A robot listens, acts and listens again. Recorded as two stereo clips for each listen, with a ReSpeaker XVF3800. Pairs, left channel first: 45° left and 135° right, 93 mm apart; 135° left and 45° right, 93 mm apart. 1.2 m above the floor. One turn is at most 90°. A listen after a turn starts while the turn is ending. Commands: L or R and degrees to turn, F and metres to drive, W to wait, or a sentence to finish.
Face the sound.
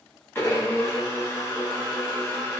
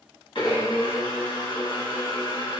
L90
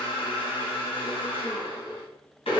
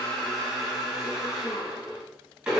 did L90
L30
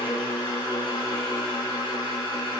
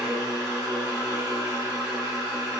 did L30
L20
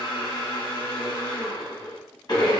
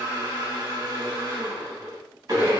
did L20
Facing the blender.